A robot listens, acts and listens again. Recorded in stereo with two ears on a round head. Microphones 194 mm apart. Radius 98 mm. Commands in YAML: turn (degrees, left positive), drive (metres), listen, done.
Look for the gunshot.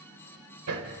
listen: true
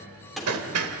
turn: 30
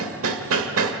listen: true
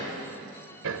done: "I heard a gunshot, but can't make it out now. It was about 30° right or 150° left."